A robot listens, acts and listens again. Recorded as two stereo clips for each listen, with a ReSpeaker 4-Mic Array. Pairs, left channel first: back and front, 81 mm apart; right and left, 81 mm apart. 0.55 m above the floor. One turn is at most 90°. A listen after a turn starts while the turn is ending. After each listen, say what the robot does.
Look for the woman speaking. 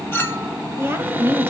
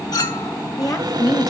Turn 55° right.
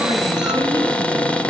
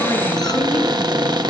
Keep listening.
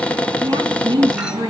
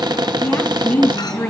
Turn 15° right.
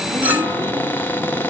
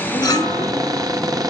Keep listening.
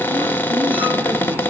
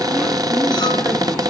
Keep listening.
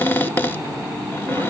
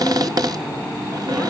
Facing where the woman speaking came from. I can't hear it now.